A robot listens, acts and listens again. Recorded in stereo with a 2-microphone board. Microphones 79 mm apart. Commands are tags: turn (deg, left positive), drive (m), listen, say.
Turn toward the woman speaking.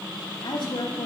<turn deg="90"/>
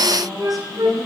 <listen/>
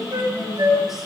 <say>Facing the woman speaking.</say>